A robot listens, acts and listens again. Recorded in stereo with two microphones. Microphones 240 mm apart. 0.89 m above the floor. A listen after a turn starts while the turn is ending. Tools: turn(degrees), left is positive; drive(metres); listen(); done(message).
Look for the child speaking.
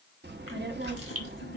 turn(degrees=-45)
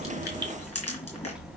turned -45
done("Facing the child speaking, 1 to 2 m away.")